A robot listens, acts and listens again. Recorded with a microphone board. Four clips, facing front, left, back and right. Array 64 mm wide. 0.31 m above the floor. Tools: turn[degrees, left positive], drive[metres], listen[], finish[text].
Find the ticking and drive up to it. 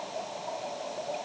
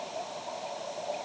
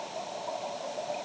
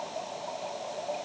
Action: listen[]
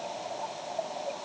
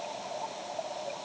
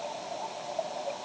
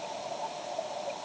Action: listen[]
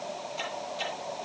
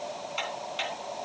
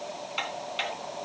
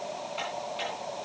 Thought: The ticking: 160° left.
Action: turn[160]
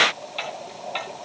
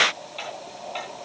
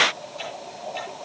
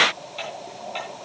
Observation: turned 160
Action: drive[1.0]
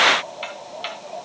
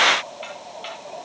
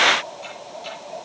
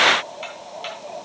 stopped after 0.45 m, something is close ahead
Thought: The ticking is now 10° right.
Action: turn[-10]
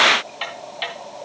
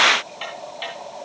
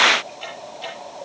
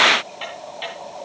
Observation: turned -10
Action: finish[Something is in my way. I am facing the ticking but have not reached it.]